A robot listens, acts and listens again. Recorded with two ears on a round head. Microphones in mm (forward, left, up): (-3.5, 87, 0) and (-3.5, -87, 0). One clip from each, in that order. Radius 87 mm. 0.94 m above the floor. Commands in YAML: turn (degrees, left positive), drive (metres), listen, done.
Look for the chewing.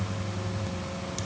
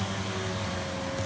listen: true
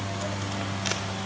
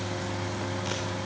listen: true
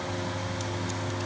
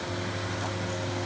done: "I can't make out chewing to turn to."